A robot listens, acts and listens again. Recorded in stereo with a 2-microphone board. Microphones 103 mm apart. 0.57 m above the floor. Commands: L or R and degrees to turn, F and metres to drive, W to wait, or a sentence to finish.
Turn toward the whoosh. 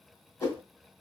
L25
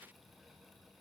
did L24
W
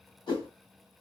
L135
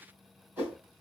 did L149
R15
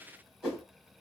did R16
Found it: a whoosh, straight ahead.